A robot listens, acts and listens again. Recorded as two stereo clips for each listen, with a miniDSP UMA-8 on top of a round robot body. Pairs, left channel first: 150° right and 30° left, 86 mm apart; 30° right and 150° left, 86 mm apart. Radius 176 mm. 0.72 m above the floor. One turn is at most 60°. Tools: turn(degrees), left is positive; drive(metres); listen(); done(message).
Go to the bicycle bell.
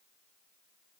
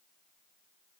listen()
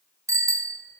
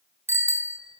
turn(degrees=60)
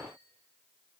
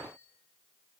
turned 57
turn(degrees=30)
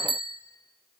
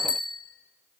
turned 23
drive(metres=1.0)
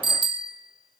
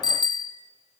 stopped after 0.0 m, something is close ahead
done("Something is in my way. I am facing the bicycle bell but have not reached it.")